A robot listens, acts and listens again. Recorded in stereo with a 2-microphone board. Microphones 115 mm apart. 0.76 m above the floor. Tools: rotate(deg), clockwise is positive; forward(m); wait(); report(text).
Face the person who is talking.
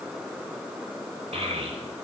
rotate(60)
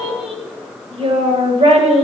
rotate(60)
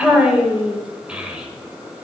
rotate(10)
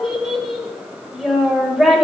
report("Found it: a child speaking, straight ahead.")